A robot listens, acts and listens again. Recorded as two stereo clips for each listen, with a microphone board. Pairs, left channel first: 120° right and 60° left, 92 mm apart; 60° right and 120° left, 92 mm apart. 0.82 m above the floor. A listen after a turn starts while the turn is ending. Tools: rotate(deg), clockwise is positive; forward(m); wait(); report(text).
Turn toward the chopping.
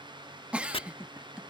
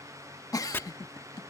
rotate(125)
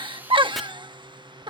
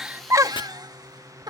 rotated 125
wait()
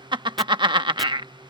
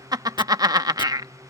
wait()
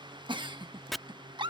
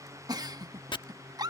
rotate(30)
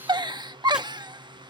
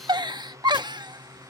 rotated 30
wait()
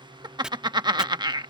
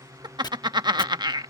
rotate(20)
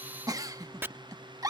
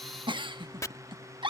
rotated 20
report("Found it: chopping, straight ahead.")